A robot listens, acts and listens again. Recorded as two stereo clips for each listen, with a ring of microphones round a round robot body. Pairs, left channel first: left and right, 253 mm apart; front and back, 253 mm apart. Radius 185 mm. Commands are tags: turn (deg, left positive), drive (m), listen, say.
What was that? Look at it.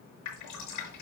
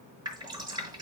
<turn deg="105"/>
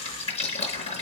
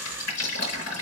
<turn deg="25"/>
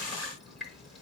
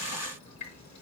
<say>Found it: dripping, straight ahead.</say>